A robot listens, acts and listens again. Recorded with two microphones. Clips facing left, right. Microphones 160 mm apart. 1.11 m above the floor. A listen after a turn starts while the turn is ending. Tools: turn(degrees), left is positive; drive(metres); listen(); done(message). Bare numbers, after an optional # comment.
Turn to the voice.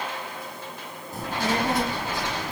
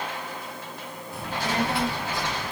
# The child speaking: about 40° left or 140° left.
turn(40)
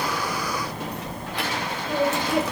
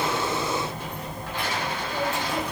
# So it is at 100° left.
turn(100)
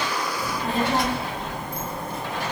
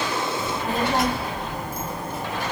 done("Facing the child speaking, under 1 m away.")